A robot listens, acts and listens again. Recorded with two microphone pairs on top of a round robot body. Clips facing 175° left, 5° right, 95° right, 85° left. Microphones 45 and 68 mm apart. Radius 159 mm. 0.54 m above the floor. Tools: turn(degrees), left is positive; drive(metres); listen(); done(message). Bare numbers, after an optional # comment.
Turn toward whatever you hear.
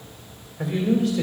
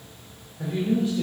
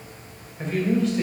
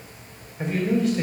# The man speaking: 165° left.
turn(165)
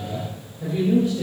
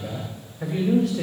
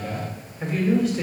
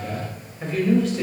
# The man speaking is now 15° right.
turn(-15)
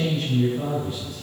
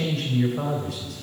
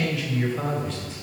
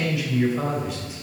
done("Found it: a man speaking, straight ahead, 2 to 4 m away.")